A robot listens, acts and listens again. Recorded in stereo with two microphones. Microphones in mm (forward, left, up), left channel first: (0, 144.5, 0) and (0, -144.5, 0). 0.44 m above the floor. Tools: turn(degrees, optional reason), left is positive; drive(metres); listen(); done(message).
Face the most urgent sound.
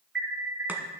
turn(degrees=-40, reason="The alarm: about 40° right or 140° right.")
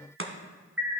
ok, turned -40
done("Found it: an alarm, straight ahead, 1 to 2 m away.")